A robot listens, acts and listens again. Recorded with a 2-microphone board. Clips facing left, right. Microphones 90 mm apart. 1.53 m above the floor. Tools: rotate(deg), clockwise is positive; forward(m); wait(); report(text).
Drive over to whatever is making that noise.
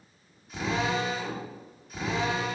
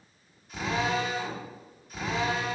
rotate(-30)
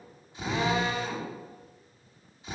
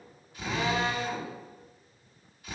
rotate(-150)
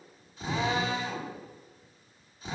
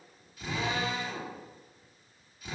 rotate(-35)
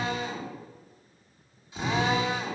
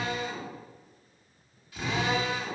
rotate(-25)
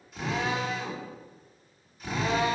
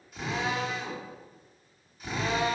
forward(1.0)
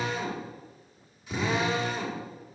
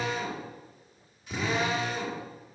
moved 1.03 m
forward(1.0)
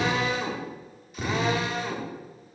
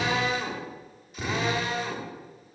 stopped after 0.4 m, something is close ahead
report("I am next to the drill.")